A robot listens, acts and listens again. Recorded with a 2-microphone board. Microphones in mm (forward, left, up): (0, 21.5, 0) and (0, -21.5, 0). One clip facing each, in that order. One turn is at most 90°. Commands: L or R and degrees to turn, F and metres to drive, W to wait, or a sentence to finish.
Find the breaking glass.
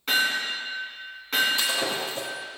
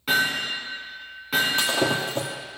R50
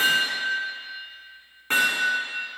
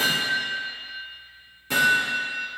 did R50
W
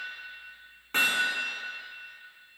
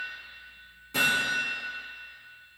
I heard breaking glass, but can't make it out now. It was about straight ahead or 80° right.